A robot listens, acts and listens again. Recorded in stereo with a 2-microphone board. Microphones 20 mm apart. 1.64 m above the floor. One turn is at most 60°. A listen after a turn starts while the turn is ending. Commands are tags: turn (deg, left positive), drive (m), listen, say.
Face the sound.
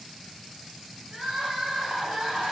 <turn deg="-60"/>
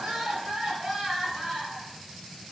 <turn deg="-20"/>
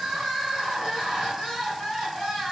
<say>Facing the crying, 1 to 2 m away.</say>